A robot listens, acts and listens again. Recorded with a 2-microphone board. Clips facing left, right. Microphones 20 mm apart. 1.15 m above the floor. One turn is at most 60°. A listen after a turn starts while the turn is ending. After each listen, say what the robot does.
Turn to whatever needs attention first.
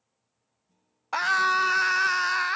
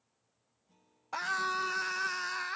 Turn 35° left.
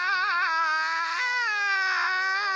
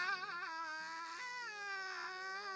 Turn 60° left.
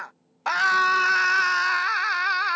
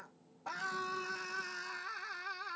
Turn 60° left.
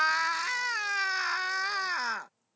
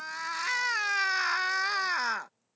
Facing the scream.